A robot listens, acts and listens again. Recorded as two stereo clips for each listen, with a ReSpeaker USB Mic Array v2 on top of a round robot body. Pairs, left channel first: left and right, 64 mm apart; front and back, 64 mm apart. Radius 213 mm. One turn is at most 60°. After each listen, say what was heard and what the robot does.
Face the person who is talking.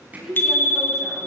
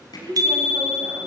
The woman speaking: 170° right. Turn 60° right.
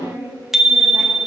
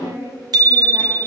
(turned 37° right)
The woman speaking is now 140° right. Turn 60° right.
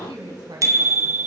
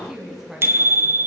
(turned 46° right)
The woman speaking is now 100° right. Turn 60° right.
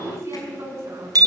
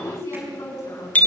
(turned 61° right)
The woman speaking is now 45° right. Turn 45° right.
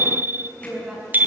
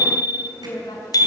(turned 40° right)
Facing the woman speaking, over 4 m away.